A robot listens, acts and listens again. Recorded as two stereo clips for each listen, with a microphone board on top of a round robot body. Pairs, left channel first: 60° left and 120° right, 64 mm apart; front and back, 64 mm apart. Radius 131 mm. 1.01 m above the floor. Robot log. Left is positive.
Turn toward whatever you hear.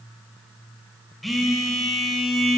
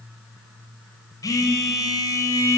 note: The phone buzzing: 30° right.
cmd yaw -30
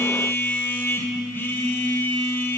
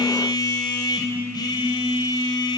end: Facing the phone buzzing, 2 to 4 m away.